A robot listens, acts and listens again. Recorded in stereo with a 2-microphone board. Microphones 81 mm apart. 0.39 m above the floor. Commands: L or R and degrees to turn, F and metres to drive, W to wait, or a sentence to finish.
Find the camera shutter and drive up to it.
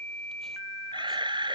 R90
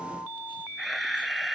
F1.0
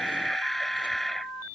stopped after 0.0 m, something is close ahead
Blocked. The camera shutter is further on, straight ahead.